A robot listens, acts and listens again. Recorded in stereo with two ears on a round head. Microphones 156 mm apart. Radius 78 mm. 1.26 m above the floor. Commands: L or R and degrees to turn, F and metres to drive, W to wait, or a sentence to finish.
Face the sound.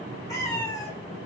L20
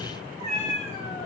L35
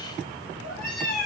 L120
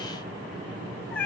L10
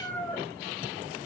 L10
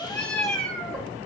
Found it: a cat meowing, straight ahead, 1 to 2 m away.